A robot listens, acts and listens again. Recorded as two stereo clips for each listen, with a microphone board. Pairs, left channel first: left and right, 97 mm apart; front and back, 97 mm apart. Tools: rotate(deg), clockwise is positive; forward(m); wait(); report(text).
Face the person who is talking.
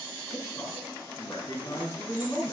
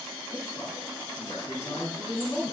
rotate(-45)
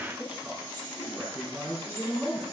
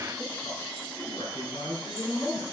rotate(10)
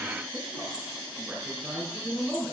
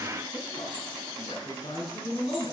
report("Facing the man speaking.")